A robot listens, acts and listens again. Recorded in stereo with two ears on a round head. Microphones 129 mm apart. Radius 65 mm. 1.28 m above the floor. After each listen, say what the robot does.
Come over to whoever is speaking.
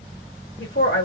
Turn 90° left.
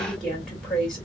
Drive 1.0 m forward.
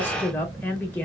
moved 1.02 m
Turn 10° left.
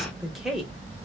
Drive 1.0 m forward.
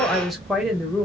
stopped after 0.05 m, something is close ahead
I am next to the woman speaking.